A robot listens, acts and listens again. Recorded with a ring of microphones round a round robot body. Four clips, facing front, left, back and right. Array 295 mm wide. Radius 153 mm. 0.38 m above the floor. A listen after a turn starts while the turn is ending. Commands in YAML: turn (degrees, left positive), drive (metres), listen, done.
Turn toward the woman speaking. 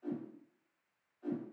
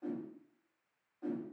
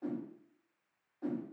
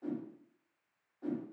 listen: true
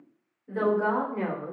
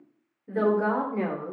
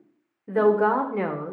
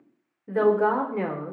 turn: -175
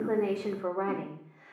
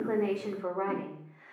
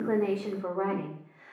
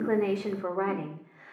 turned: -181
turn: -95
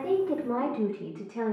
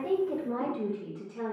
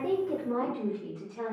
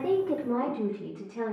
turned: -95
turn: -25
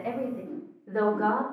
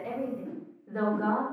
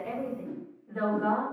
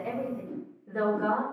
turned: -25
done: "Facing the woman speaking, 2 to 4 m away."